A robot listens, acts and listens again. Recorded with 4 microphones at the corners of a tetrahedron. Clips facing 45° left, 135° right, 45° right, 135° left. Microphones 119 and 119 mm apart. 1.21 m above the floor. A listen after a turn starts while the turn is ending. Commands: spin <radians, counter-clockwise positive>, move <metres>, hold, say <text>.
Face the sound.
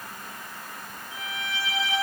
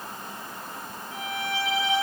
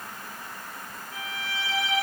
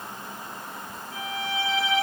spin -3.05
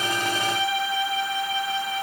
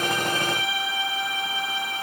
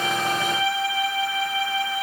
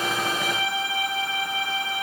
say Found it: a violin, straight ahead, over 4 m away.